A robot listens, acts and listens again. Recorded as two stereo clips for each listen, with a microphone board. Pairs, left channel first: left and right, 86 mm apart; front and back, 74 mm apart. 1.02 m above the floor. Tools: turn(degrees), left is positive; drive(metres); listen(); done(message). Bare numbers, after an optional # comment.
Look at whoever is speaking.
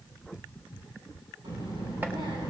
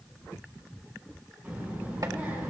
# The child speaking: 110° right.
turn(-110)
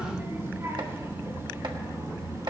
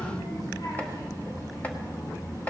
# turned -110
# The child speaking is now 35° right.
turn(-35)
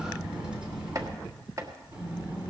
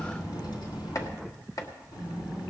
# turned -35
# The child speaking is now 15° right.
turn(-15)
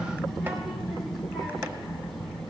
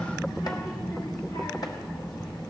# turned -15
done("Facing the child speaking, over 4 m away.")